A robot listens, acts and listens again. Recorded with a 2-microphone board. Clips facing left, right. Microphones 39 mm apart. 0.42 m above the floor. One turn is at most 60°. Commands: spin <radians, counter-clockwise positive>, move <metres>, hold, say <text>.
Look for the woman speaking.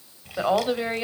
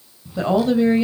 spin 0.35
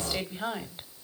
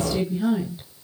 spin 1.05
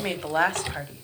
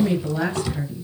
spin 1.05
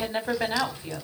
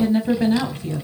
spin 0.44
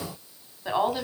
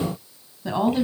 spin 0.26
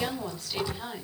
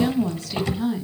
say Facing the woman speaking.